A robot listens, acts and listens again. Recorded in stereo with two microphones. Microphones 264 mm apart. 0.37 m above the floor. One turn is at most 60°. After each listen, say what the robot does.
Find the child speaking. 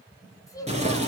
Turn 30° left.
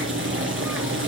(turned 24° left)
Keep listening.
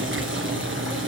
Keep listening.
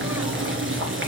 I heard a child speaking, but can't make it out now. It was about 10° right or 145° left.